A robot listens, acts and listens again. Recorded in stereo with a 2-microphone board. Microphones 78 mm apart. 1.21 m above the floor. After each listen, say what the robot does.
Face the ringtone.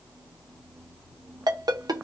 Turn 75° right.
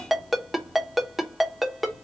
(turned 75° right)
Found it: a ringtone, straight ahead.